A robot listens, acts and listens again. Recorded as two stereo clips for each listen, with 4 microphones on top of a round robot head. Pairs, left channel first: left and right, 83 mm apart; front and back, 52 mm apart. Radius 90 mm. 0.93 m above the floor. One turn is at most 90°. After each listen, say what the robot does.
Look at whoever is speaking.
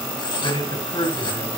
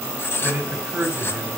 Turn 90° left.
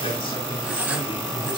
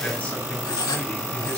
Turn 60° left.
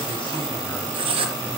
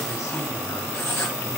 Keep listening.
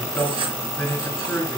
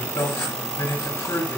Turn 15° left.
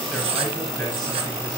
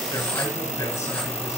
Keep listening.
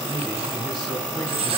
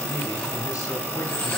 Found it: a man speaking, straight ahead.